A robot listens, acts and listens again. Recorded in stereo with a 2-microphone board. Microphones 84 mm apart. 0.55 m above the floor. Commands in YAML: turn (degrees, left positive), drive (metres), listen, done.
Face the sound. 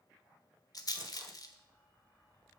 turn: 50
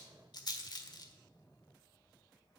turn: 70
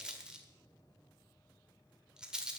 turn: -10
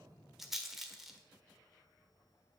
done: "Facing the rattle."